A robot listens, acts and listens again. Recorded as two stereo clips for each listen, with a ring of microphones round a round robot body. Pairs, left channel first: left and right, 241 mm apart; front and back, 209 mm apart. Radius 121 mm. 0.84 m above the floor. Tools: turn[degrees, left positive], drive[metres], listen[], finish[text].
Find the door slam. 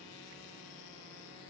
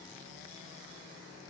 Action: listen[]
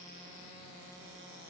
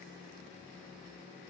Action: listen[]
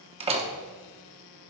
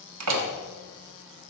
Thought: The door slam: 155° right.
Action: turn[-155]
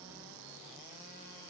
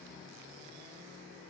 Action: finish[Facing where the door slam came from. I can't hear it now.]